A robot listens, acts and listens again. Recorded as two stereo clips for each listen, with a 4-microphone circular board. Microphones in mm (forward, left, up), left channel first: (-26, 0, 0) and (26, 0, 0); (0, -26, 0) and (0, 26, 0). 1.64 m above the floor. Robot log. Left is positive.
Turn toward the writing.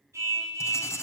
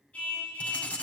note: The writing: 155° right.
cmd yaw -155
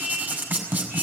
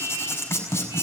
note: The writing is now 55° right.
cmd yaw -55
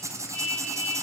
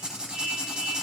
note: The writing is now 15° left.
cmd yaw +15
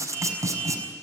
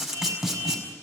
end: Facing the writing.